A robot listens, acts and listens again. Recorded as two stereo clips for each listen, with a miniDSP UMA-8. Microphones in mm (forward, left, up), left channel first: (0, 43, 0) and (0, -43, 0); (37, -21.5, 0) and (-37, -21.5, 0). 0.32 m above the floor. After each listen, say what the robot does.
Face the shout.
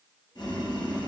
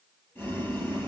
Keep listening.
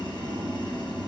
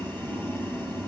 Keep listening.
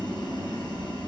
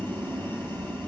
I can't make out a shout to turn to.